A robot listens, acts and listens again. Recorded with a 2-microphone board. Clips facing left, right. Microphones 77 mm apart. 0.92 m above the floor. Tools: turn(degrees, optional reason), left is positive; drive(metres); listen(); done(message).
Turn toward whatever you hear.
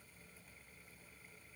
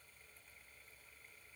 listen()
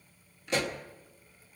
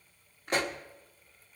turn(degrees=-45, reason="The pop: about 45° right or 135° right.")
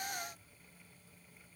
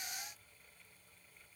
listen()
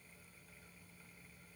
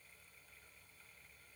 done("I heard a pop, but can't make it out now. It was about straight ahead or 90° right.")